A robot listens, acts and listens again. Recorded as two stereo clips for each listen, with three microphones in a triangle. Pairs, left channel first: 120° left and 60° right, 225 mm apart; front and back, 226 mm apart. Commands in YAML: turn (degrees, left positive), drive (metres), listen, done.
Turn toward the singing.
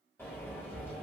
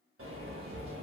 listen: true
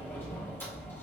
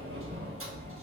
listen: true
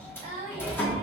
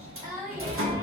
turn: -105
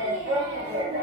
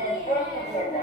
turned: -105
listen: true
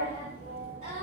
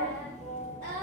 listen: true
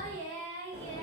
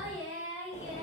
done: "Facing the singing, 2 to 4 m away."